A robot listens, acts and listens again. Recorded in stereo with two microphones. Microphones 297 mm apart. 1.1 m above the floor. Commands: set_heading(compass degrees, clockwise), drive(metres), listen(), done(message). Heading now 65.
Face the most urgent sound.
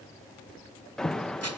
set_heading(35)
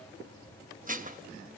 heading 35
listen()
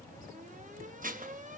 set_heading(65)
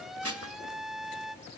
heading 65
done("Found it: an alarm, straight ahead, under 1 m away.")